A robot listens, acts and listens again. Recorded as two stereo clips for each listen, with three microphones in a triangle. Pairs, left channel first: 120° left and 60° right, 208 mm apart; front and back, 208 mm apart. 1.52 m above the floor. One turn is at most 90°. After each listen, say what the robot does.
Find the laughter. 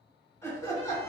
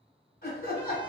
Turn 45° left.
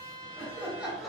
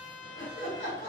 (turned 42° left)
Turn 30° left.
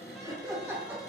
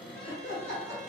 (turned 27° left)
Turn 20° left.
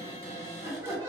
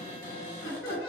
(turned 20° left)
Turn 20° left.
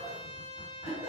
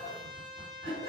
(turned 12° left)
Turn 15° left.
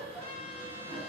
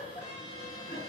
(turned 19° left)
Facing the laughter, 1 to 2 m away.